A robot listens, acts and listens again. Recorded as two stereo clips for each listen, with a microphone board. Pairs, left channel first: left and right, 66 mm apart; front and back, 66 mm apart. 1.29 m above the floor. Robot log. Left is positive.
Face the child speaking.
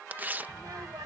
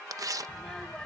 note: The child speaking: 80° right.
cmd yaw -80
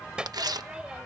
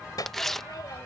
note: The child speaking is now 15° right.
cmd yaw -15
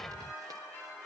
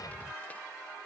end: Facing the child speaking.